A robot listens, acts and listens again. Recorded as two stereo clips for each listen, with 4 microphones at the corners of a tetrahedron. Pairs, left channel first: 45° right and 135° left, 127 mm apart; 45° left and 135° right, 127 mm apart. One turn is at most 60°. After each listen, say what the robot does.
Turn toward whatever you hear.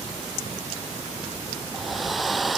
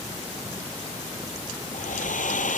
Turn 45° left.
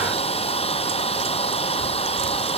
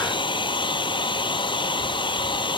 Found it: a hair dryer, straight ahead.